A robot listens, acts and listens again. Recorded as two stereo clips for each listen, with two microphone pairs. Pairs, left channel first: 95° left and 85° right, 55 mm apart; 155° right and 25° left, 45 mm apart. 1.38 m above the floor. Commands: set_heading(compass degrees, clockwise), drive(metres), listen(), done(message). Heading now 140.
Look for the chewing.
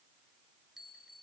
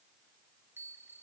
listen()
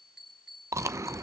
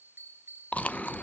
set_heading(240)
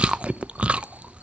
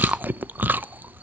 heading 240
set_heading(255)
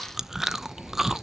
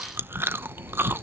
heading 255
done("Found it: chewing, straight ahead.")